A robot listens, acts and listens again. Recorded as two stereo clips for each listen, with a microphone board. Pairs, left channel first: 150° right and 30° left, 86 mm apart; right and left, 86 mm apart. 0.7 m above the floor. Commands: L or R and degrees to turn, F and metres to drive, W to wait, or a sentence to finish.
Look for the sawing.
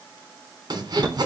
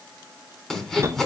Found it: sawing, straight ahead, 2 to 4 m away.